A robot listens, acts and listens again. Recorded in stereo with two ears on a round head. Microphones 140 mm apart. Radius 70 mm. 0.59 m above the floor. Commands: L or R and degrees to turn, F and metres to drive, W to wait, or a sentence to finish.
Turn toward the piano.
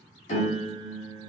L50
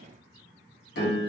L80
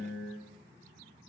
L15
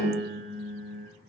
Found it: a piano, straight ahead.